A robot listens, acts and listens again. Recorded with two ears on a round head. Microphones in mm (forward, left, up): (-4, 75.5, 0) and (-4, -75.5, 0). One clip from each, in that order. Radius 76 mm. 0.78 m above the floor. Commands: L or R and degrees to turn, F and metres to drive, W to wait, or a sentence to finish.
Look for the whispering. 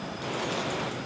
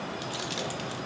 W
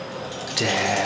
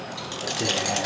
L55
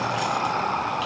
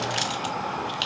L55
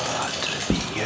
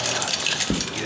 L15
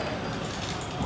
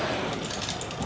Found it: whispering, straight ahead, under 1 m away.